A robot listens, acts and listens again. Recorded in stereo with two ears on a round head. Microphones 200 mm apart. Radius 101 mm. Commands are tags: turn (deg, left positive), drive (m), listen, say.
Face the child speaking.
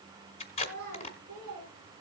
<turn deg="-40"/>
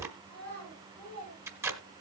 <say>Facing the child speaking.</say>